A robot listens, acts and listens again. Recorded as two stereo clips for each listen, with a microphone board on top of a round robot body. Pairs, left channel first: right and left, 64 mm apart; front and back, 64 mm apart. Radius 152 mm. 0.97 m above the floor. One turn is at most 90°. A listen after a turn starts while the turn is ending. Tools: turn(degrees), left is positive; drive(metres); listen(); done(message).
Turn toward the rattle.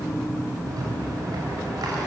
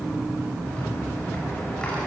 turn(degrees=70)
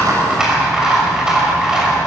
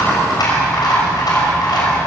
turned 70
turn(degrees=10)
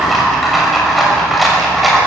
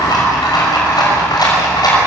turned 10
done("Facing the rattle.")